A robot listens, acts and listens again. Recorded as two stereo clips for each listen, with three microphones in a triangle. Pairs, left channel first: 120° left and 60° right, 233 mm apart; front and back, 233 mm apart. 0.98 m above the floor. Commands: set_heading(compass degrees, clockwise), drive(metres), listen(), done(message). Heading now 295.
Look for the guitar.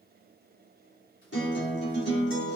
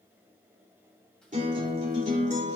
set_heading(170)
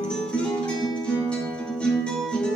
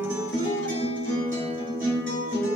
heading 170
set_heading(135)
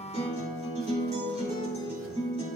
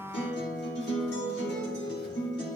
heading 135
done("Facing the guitar, 2 to 4 m away.")